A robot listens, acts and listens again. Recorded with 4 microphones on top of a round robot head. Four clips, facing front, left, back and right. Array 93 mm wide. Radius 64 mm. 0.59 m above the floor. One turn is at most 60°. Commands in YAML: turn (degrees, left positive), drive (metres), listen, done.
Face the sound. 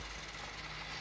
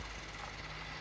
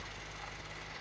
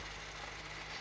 listen: true
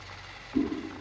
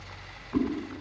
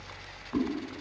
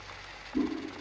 turn: 60
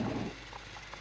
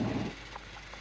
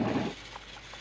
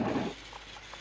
turn: 60
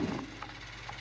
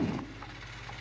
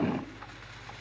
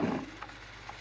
turn: 10
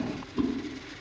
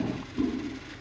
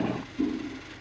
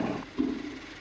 done: "Found it: a whoosh, straight ahead, over 4 m away."